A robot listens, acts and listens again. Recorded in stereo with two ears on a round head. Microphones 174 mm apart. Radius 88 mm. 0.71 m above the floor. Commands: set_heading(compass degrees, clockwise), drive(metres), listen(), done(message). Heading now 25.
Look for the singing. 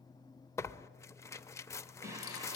set_heading(40)
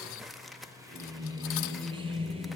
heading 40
set_heading(70)
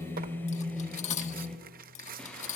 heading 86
done("Facing the singing.")